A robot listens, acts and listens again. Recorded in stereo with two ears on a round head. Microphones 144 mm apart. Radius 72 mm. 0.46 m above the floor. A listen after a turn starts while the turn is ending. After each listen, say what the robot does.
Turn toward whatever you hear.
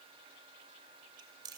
Turn 30° right.
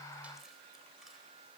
Keep listening.
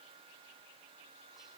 Keep listening.
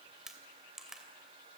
Found it: chewing, straight ahead.